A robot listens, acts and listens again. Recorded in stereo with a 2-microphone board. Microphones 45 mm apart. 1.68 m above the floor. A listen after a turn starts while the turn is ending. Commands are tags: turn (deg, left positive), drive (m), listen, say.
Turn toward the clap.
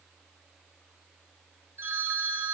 <listen/>
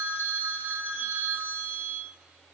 <listen/>
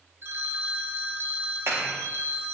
<turn deg="-90"/>
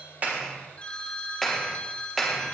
<say>Facing the clap.</say>